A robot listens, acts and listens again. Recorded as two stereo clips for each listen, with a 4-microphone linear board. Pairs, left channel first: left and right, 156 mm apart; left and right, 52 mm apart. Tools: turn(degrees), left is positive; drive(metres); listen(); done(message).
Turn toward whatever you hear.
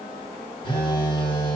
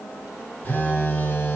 turn(degrees=30)
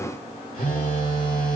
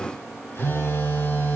turn(degrees=110)
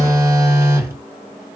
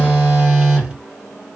turn(degrees=-20)
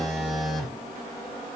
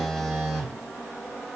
done("Found it: a phone buzzing, straight ahead, 2 to 4 m away.")